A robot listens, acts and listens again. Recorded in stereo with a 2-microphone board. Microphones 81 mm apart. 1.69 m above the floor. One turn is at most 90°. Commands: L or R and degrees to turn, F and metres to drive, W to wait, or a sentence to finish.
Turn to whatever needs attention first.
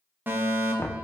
R25
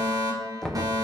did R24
R90
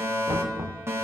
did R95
R35
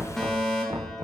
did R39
Found it: a fire alarm, straight ahead.